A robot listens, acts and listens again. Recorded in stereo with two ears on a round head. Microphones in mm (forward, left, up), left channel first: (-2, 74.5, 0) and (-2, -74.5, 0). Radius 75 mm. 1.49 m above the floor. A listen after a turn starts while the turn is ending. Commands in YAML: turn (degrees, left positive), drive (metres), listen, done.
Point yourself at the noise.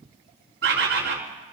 turn: -75
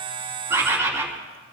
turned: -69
turn: -15
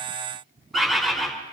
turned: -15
done: "Facing the bird, 2 to 4 m away."